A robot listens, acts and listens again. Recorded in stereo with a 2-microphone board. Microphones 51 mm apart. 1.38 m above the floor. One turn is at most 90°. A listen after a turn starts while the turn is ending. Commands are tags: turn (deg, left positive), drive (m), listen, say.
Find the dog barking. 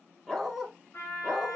<turn deg="30"/>
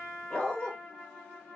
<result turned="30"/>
<turn deg="90"/>
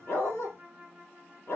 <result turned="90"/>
<turn deg="65"/>
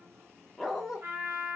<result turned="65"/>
<say>Facing the dog barking, 1 to 2 m away.</say>